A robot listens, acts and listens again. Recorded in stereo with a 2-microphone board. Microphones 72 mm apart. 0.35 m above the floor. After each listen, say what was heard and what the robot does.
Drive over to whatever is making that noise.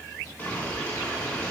The boiling: about 25° left or 155° left. Turn 25° left.
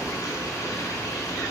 So it is at 125° left. Turn 125° left.
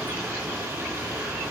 The boiling is now 35° right. Turn 35° right.
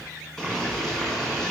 Drive 1.0 m forward.
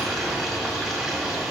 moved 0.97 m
Drive 1.0 m forward.
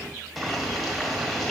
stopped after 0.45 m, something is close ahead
I am next to the boiling.